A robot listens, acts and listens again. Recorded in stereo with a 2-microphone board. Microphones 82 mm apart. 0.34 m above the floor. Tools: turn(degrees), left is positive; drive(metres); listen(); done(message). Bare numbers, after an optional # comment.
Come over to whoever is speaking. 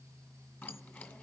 listen()
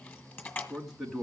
turn(30)
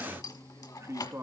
# So it is at 35° right.
turn(-35)
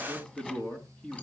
# The man speaking is now 15° left.
turn(15)
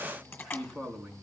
drive(1.0)
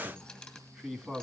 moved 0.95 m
drive(1.0)
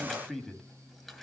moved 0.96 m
drive(1.0)
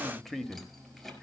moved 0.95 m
drive(1.0)
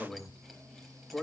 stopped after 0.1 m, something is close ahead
# The man speaking is now 10° left.
turn(10)
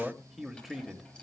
done("Arrived at the man speaking, straight ahead.")